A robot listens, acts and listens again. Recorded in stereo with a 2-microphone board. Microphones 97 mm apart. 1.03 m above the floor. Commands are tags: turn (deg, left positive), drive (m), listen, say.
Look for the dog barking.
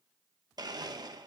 <listen/>
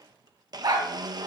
<turn deg="-50"/>
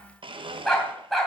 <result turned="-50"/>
<say>Found it: a dog barking, straight ahead, 2 to 4 m away.</say>